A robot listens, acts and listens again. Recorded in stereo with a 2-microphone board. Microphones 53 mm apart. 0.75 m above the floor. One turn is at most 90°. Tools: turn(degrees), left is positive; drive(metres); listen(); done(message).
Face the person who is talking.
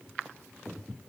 listen()
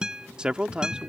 turn(degrees=-20)
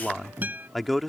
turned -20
done("Facing the man speaking.")